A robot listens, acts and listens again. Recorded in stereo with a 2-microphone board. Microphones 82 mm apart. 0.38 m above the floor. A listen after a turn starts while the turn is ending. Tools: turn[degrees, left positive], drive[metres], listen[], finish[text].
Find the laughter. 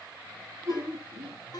Thought: The laughter: about 40° right or 140° right.
Action: turn[-40]
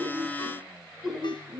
Action: finish[Found it: laughter, straight ahead.]